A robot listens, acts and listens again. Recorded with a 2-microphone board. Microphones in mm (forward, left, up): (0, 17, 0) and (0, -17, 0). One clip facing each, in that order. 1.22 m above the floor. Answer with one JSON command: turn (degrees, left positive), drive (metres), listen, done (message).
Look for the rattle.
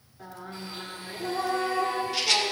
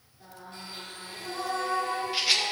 {"turn": -30}
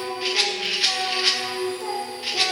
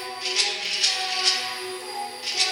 {"turn": 20}
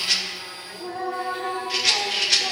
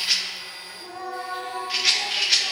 {"done": "Found it: a rattle, straight ahead."}